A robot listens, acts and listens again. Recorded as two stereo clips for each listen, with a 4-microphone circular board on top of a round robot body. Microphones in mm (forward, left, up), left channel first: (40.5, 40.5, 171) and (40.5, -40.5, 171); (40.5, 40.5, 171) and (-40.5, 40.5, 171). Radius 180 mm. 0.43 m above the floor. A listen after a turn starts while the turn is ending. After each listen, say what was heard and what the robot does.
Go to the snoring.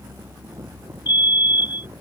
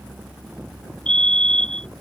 Keep listening.
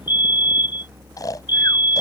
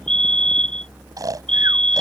The snoring: 135° left. Turn 135° left.
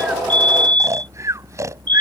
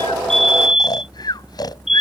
The snoring is now 40° right. Turn 40° right.
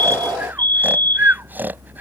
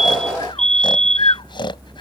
The snoring is now 25° right. Turn 25° right.
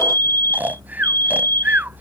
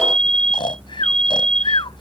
The snoring is now 20° right. Turn 20° right.
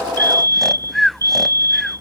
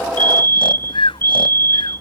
Drive 1.0 m forward.
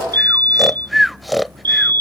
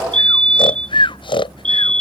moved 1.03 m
Drive 1.0 m forward.
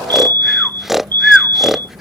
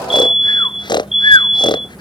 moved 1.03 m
Drive 1.0 m forward.
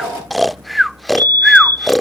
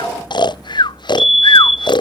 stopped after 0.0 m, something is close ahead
Arrived at the snoring, straight ahead.